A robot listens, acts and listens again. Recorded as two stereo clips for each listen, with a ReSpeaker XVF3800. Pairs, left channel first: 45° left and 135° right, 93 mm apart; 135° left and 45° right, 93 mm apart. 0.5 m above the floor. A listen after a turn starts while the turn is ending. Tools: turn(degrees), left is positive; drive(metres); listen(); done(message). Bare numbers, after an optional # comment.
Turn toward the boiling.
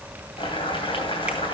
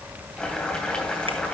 # The boiling: 55° left.
turn(55)
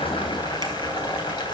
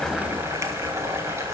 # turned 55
# The boiling is now 15° left.
turn(15)
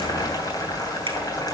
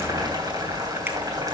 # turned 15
done("Found it: boiling, straight ahead, 2 to 4 m away.")